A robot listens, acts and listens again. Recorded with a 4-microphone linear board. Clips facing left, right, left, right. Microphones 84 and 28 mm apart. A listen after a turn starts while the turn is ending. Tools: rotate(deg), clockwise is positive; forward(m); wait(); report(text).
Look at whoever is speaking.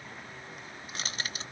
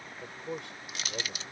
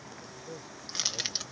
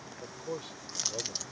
rotate(90)
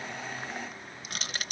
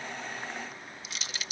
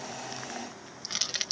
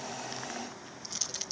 wait()
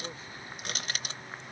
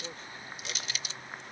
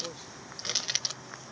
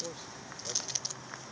wait()
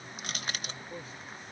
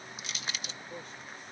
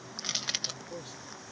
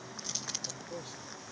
report("Found it: a man speaking, straight ahead.")